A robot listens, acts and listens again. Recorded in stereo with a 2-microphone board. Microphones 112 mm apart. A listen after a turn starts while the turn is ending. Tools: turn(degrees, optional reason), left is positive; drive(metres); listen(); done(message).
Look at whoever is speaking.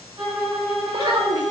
turn(degrees=-40, reason="The child speaking: about 40° right or 140° right.")
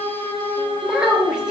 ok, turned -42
turn(degrees=-10, reason="So it is at 10° right.")
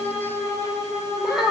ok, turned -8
done("Found it: a child speaking, straight ahead.")